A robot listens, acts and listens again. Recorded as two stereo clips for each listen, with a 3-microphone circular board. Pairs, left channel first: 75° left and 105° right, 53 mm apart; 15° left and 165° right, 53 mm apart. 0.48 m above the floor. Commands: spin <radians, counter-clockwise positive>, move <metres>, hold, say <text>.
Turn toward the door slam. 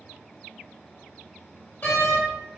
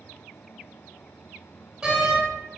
spin 2.01
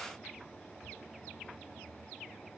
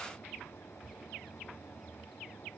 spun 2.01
say Facing where the door slam came from. I can't hear it now.